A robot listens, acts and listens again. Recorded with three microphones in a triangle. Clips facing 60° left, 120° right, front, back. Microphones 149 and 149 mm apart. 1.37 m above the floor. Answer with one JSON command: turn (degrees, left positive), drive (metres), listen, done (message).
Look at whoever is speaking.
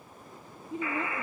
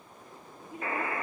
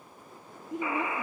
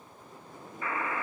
{"done": "Found it: a woman speaking, straight ahead."}